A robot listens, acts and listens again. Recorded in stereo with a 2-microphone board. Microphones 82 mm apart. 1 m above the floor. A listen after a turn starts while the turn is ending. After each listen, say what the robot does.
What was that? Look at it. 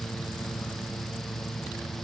Keep listening.
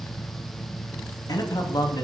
Turn 60° left.
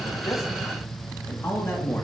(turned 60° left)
Turn 25° left.
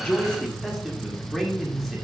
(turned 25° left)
Facing the man speaking.